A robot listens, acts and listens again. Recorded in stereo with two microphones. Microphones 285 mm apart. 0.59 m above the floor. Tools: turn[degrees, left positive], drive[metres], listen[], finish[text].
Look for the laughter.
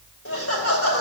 Thought: The laughter: about 50° left or 130° left.
Action: turn[50]
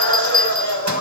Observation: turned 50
Thought: So it is at 75° left.
Action: turn[75]
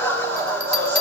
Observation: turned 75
Thought: The laughter is now 10° left.
Action: turn[10]
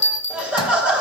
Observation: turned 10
Action: finish[Found it: laughter, straight ahead.]